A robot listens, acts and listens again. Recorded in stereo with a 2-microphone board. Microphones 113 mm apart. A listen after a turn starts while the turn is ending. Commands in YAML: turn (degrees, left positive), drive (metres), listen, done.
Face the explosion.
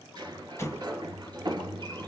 turn: 25
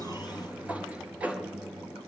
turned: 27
listen: true
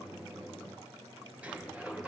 done: "I heard an explosion, but can't make it out now. It was about straight ahead or 125° left."